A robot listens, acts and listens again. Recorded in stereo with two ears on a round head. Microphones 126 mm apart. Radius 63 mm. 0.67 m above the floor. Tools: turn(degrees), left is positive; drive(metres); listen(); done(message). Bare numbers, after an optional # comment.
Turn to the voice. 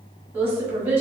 turn(-30)
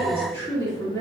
# So it is at 20° left.
turn(20)
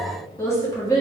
# The woman speaking is now 25° left.
turn(25)
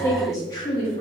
# The woman speaking is now 35° left.
turn(35)
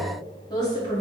# The woman speaking is now 35° left.
turn(35)
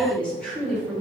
# The woman speaking is now 10° left.
turn(10)
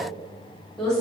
done("Facing the woman speaking, 1 to 2 m away.")